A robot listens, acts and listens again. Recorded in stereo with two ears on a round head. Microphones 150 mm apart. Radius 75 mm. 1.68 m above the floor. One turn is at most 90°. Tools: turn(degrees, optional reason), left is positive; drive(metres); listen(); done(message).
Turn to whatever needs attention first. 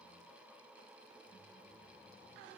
listen()
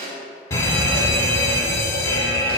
turn(degrees=20, reason="The fire alarm: about 20° left or 160° left.")
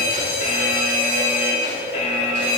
turn(degrees=90, reason="So it is at 140° left.")
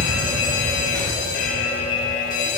turn(degrees=65, reason="The fire alarm is now 65° left.")
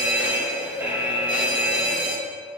turn(degrees=-10, reason="The fire alarm is now 10° right.")
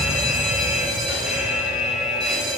done("Found it: a fire alarm, straight ahead, under 1 m away.")